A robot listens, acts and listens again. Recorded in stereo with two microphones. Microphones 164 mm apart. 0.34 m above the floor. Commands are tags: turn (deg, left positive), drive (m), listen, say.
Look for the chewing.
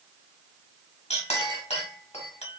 <listen/>
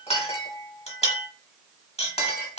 <listen/>
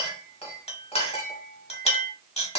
<say>I can't make out chewing to turn to.</say>